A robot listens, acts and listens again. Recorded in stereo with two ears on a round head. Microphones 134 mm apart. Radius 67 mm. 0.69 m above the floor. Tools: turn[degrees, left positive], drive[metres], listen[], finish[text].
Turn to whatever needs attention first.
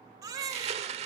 Thought: The baby crying: about 25° right or 155° right.
Action: turn[-25]
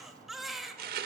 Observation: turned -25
Action: finish[Facing the baby crying.]